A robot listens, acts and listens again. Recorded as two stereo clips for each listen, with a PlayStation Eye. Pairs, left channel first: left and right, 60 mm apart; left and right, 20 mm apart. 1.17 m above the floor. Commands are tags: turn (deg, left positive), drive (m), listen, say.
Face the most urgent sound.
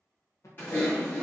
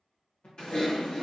<turn deg="65"/>
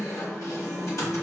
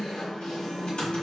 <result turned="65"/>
<listen/>
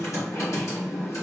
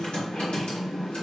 <listen/>
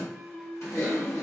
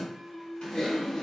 <turn deg="10"/>
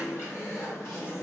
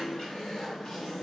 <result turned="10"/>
<listen/>
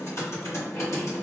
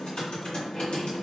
<listen/>
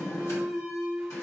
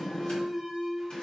<say>Facing the alarm.</say>